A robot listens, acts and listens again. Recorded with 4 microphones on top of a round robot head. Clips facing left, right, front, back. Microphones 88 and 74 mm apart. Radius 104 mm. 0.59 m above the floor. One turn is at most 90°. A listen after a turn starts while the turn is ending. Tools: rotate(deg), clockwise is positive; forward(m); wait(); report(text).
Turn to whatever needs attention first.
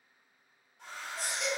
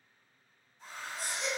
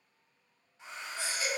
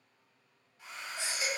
rotate(-90)
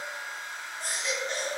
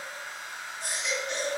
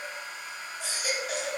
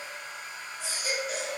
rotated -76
rotate(-30)
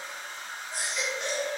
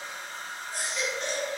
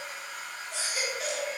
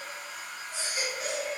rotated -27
report("Found it: a baby crying, straight ahead, under 1 m away.")